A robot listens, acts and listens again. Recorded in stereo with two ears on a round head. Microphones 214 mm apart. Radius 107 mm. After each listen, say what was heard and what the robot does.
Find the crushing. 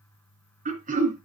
Keep listening.
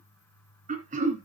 Keep listening.
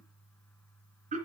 I can't make out crushing to turn to.